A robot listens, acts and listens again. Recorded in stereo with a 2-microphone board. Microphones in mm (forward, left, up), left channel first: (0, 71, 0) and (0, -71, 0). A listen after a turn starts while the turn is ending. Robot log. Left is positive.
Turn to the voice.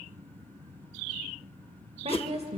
note: The woman speaking: about 45° right or 135° right.
cmd yaw -45
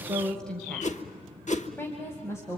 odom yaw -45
note: So it is at 20° left.
cmd yaw +20
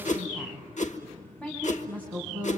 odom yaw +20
note: The woman speaking is now 10° left.
cmd yaw +10
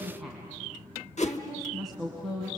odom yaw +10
end: Facing the woman speaking, 2 to 4 m away.